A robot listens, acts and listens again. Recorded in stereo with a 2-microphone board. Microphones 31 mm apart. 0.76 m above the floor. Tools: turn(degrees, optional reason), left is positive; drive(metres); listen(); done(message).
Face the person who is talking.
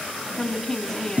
turn(degrees=30)
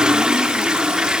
listen()
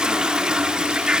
listen()
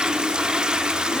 done("I heard a woman speaking, but can't make it out now. It was about 20° right or 140° left.")